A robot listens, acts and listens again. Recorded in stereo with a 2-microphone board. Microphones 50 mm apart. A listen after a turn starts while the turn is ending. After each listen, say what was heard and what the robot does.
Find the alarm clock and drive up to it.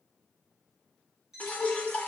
Turn 30° right.
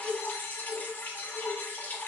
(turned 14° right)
Keep listening.
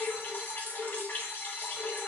Keep listening.
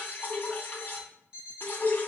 So it is at 155° right. Turn 155° right.
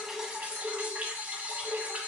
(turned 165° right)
Nothing new. It was at 10° left. Turn 10° left.
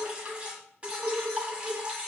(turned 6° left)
Keep listening.
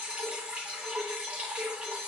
Facing where the alarm clock came from. I can't hear it now. I did not reach it.